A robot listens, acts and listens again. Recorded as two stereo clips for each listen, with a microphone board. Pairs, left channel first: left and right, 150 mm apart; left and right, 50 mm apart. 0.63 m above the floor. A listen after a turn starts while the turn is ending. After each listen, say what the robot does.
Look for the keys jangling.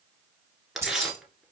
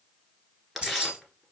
Turn 20° right.
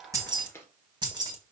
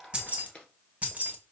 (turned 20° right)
Turn 30° right.
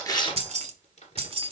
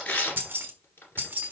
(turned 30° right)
Turn 140° right.
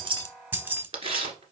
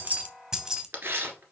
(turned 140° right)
Turn 15° right.
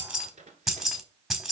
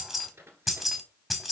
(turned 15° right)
Found it: keys jangling, straight ahead.